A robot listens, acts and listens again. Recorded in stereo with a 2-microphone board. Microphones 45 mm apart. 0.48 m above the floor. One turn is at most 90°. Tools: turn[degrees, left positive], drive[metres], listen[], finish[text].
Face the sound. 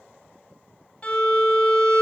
Thought: The violin: about 25° left or 155° left.
Action: turn[25]
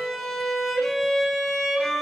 Action: finish[Facing the violin, 2 to 4 m away.]